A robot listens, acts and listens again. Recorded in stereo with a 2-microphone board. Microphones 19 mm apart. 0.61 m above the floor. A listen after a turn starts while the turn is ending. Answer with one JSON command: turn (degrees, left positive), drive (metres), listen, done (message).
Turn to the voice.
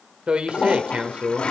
{"turn": -70}
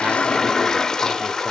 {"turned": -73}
{"listen": true}
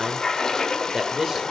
{"turn": -25}
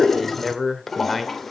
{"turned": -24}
{"done": "Found it: a man speaking, straight ahead, 1 to 2 m away."}